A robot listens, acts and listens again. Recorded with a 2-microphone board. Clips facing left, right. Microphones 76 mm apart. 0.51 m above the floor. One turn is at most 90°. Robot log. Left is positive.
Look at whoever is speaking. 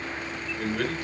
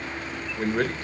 note: The man speaking: about 35° right or 145° right.
cmd yaw -35
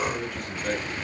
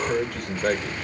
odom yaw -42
note: So it is at 95° right.
cmd yaw -90
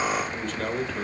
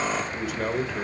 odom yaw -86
note: The man speaking is now 10° right.
cmd yaw -10
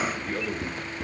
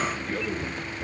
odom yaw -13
cmd idle
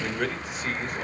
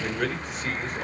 end: Found it: a man speaking, straight ahead, 1 to 2 m away.